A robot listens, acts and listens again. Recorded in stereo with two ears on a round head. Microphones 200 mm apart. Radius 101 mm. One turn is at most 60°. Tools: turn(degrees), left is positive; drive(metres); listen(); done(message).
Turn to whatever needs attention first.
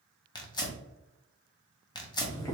listen()
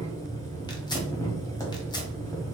listen()
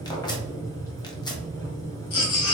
turn(degrees=60)
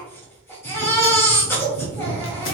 turn(degrees=10)
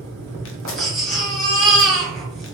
done("Found it: a baby crying, straight ahead, 1 to 2 m away.")